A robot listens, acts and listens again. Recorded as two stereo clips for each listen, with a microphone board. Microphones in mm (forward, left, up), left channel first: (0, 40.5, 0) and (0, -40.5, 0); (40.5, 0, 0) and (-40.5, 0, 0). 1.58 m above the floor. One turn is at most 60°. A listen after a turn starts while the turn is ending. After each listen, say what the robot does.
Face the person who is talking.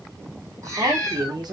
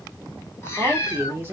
Turn 60° right.
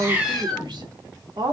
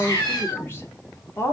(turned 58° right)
Turn 60° right.
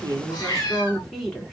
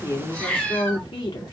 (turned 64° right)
Facing the woman speaking.